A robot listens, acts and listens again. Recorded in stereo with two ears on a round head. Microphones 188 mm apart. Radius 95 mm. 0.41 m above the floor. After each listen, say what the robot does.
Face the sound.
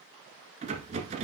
Turn 35° right.
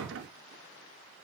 Turn 110° right.
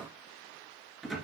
Facing the rattle, 1 to 2 m away.